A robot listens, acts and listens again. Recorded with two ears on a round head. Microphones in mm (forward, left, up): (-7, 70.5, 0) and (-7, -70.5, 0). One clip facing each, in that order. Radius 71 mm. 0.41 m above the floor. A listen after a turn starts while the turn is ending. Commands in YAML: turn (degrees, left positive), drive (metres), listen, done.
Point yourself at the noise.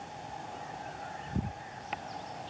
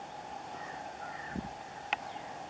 listen: true
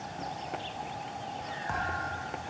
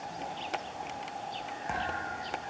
turn: -20
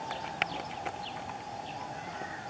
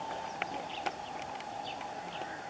listen: true
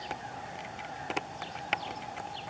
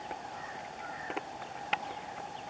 done: "I heard a thud, but can't make it out now. It was about straight ahead or 140° right."